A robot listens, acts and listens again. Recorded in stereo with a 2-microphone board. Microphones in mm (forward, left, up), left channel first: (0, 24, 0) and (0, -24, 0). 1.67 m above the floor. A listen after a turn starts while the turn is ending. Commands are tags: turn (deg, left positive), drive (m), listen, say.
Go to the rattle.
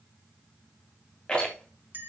<turn deg="25"/>
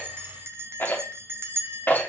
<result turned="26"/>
<turn deg="130"/>
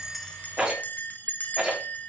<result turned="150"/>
<turn deg="-20"/>
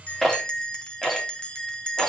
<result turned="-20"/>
<drive m="1.0"/>
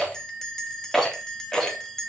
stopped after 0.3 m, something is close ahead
<say>Blocked. The rattle is further on, straight ahead.</say>